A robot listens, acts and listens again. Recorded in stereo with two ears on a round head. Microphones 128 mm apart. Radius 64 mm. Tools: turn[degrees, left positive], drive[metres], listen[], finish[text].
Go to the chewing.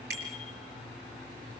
Action: listen[]
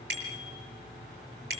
Action: listen[]
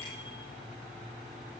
Action: finish[I can't make out chewing to turn to.]